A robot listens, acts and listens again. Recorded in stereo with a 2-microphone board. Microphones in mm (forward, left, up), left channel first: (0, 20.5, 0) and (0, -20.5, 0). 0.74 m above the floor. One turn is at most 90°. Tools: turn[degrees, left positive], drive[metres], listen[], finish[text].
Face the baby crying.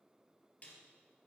Action: listen[]
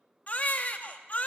Thought: The baby crying: about 40° left or 140° left.
Action: turn[40]
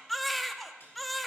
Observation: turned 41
Action: finish[Facing the baby crying.]